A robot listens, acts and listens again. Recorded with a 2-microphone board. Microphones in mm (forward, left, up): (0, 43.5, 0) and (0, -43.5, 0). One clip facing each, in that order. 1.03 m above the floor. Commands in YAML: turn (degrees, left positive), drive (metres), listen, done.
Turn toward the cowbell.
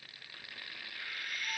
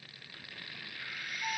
listen: true
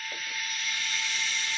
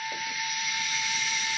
listen: true
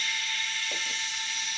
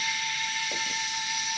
done: "I can't make out a cowbell, only frying."